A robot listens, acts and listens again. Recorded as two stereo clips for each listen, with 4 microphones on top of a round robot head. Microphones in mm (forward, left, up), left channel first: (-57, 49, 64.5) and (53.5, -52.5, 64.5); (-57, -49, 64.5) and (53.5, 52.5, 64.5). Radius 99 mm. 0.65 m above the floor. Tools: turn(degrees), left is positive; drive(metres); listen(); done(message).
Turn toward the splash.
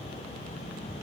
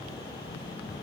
listen()
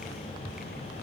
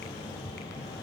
listen()
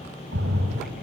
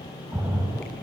turn(degrees=-35)
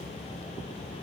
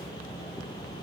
done("Facing where the splash came from. I can't hear it now.")